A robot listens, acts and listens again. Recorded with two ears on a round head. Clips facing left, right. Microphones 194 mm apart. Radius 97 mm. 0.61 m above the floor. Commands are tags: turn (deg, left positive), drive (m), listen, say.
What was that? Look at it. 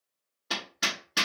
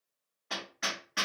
<turn deg="55"/>
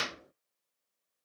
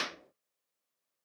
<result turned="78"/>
<turn deg="35"/>
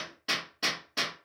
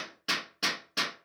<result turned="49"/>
<turn deg="-15"/>
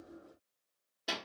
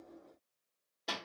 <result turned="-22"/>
<say>Facing the hammering.</say>